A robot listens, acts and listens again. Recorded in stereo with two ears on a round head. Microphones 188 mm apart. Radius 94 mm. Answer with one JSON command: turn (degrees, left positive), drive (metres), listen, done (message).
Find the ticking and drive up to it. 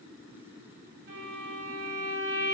{"listen": true}
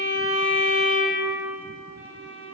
{"listen": true}
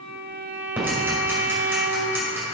{"turn": -30}
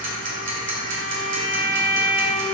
{"turn": -140}
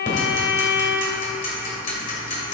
{"turn": 40}
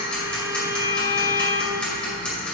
{"drive": 1.0}
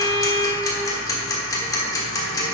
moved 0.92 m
{"turn": 15}
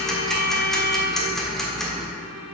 {"drive": 1.0}
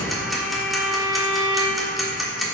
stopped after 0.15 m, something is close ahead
{"done": "Arrived at the ticking, straight ahead."}